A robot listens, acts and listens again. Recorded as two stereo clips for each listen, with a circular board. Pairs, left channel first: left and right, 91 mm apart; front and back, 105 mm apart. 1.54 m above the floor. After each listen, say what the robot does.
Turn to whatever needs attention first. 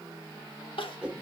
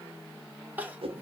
Turn 105° left.
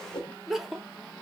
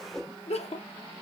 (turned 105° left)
Found it: crying, straight ahead, under 1 m away.